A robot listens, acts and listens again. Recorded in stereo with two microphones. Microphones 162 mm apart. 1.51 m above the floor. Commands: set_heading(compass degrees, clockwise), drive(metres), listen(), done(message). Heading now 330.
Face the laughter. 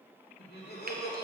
set_heading(240)
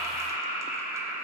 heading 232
set_heading(247)
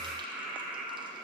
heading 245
done("Facing the laughter, 2 to 4 m away.")